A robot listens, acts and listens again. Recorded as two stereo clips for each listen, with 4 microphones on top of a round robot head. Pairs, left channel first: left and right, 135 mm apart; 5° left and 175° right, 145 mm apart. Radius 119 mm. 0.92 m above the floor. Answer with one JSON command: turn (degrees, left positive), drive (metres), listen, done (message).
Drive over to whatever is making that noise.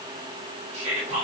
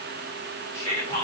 {"turn": -50}
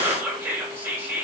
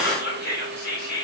{"turn": -15}
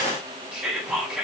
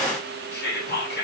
{"drive": 1.0}
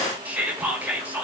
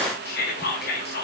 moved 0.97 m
{"turn": -10}
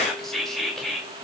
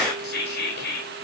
{"drive": 1.0}
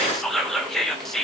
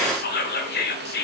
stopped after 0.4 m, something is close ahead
{"done": "I am next to the whispering."}